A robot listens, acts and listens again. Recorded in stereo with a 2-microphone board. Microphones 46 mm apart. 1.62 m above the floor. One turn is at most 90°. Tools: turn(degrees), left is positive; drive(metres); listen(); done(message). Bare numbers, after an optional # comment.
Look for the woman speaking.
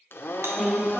turn(-30)
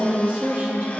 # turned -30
# So it is at 140° right.
turn(-90)
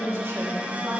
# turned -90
# The woman speaking is now 65° right.
turn(-65)
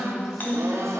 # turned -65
done("Facing the woman speaking.")